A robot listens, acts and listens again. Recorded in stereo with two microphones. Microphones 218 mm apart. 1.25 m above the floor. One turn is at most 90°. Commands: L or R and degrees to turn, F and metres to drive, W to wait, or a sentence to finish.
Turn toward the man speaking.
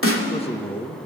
L20
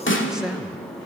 Found it: a man speaking, straight ahead, 1 to 2 m away.